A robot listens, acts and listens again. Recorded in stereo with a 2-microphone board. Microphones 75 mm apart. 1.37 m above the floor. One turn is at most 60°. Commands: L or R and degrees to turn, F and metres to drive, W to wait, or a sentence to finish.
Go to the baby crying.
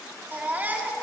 R25
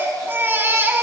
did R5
R30
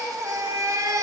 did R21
R60
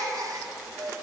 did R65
R60
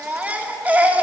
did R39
R20
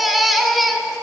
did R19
F1.0
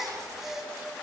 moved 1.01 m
F1.0
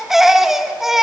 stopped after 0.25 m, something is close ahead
I am next to the baby crying.